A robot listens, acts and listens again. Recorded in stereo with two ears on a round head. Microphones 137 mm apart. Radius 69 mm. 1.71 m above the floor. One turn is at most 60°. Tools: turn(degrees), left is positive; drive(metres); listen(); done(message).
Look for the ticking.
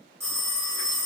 listen()
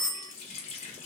listen()
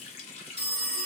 done("I can't make out ticking, only a phone ringing and a running tap.")